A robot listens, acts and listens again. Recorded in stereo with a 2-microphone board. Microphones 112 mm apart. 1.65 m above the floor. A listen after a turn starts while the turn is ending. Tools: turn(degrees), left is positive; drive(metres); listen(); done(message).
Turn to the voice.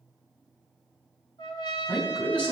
turn(degrees=30)
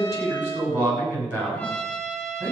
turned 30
turn(degrees=-20)
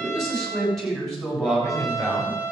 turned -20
done("Facing the man speaking, over 4 m away.")